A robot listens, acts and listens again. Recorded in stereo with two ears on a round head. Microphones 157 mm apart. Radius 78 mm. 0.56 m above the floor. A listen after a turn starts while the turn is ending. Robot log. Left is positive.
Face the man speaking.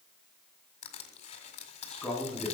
cmd yaw +30
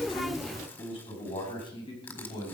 note: So it is at 150° left.
cmd yaw +150
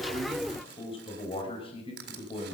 note: The man speaking is now 30° left.
cmd yaw +30
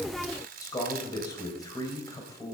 note: The man speaking is now 20° left.
cmd yaw +20
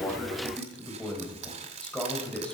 end: Facing the man speaking, 2 to 4 m away.